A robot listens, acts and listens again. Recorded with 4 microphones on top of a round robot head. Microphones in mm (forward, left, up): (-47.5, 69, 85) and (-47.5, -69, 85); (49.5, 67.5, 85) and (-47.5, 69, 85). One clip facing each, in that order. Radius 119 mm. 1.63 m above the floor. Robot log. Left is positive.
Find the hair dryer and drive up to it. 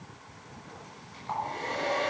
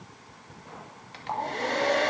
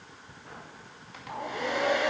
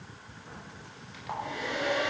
note: The hair dryer: 55° right.
cmd yaw -55
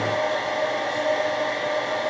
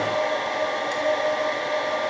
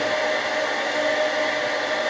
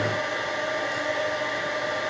cmd fwd 1.0
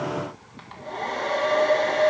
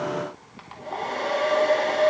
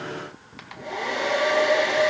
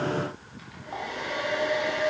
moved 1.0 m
cmd fwd 1.0
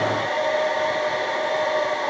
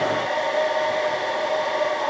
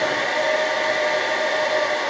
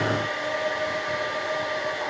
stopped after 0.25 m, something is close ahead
end: Arrived at the hair dryer, straight ahead.